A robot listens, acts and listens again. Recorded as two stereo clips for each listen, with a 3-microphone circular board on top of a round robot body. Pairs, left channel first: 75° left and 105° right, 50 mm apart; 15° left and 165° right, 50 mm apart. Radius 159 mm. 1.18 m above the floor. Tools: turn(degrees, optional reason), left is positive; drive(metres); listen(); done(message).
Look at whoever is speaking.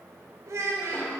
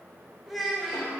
turn(degrees=-75, reason="The child speaking: 75° right.")
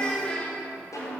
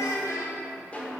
done("Facing the child speaking, under 1 m away.")